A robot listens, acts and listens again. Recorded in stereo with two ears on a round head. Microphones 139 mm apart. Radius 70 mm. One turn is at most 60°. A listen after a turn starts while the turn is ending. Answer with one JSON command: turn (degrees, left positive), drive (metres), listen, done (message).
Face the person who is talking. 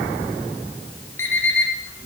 {"listen": true}
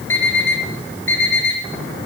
{"listen": true}
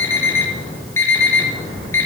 {"done": "I can't make out anyone speaking to turn to."}